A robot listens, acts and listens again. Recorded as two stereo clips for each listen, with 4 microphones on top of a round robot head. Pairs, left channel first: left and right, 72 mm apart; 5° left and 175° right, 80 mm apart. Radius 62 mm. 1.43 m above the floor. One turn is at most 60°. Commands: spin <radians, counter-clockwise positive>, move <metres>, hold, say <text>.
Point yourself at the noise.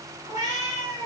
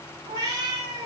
spin -1.05
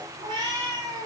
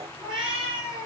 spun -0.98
spin -1.05
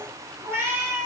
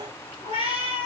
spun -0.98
spin -0.61
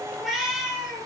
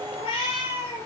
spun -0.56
say Facing the cat meowing.